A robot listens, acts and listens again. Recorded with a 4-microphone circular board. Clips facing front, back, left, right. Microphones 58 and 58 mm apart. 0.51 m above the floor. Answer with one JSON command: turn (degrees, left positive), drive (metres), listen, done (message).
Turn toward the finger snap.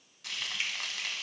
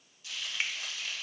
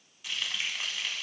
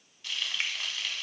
{"turn": -125}
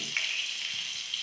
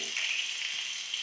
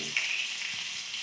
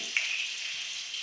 {"turn": -25}
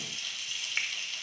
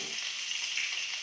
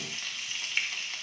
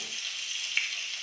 {"done": "Found it: a finger snap, straight ahead, under 1 m away."}